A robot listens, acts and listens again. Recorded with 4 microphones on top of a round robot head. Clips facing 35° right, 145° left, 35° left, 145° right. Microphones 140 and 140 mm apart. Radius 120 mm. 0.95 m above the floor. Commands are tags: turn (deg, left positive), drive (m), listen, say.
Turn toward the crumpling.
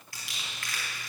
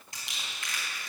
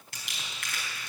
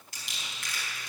<turn deg="75"/>
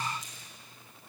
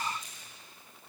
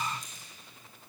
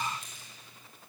<turn deg="-15"/>
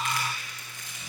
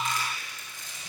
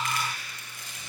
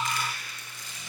<say>Facing the crumpling, 2 to 4 m away.</say>